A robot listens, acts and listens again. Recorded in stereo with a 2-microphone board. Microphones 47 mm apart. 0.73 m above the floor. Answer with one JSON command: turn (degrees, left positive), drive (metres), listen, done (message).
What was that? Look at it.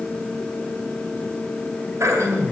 {"turn": -90}
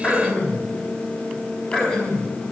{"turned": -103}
{"turn": 20}
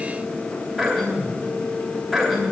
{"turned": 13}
{"turn": 10}
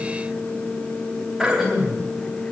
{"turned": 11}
{"done": "Facing the throat clearing, 2 to 4 m away."}